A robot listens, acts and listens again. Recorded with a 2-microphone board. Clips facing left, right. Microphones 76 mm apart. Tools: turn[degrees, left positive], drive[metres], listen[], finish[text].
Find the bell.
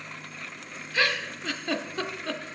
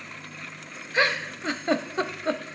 Action: listen[]
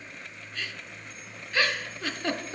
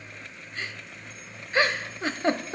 Action: listen[]
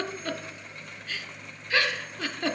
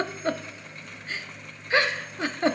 Action: finish[I can't make out a bell, only a giggle.]